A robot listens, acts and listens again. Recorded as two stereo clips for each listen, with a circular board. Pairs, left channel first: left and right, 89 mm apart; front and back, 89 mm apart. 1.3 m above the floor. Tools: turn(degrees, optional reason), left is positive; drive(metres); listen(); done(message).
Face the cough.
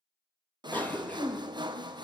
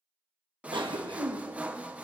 turn(degrees=160, reason="The cough: 160° left.")
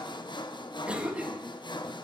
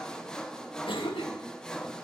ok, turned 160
turn(degrees=-10, reason="The cough is now 10° right.")
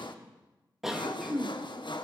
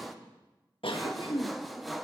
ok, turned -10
done("Found it: a cough, straight ahead, 1 to 2 m away.")